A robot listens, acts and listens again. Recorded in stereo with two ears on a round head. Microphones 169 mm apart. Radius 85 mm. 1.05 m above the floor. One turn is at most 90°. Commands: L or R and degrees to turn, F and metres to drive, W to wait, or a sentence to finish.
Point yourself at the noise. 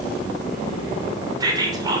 R20
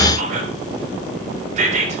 R90
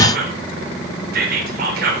R55
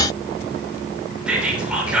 Facing the whispering, 2 to 4 m away.